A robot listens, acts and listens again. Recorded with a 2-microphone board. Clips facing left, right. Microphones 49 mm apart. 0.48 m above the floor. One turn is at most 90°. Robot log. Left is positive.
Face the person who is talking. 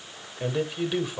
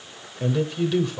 cmd yaw +30
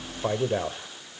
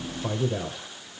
note: So it is at 135° left.
cmd yaw +90
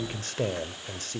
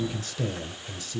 note: The man speaking is now 60° left.
cmd yaw +60
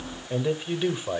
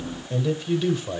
note: The man speaking is now 20° left.
cmd yaw +20
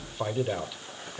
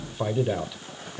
end: Facing the man speaking.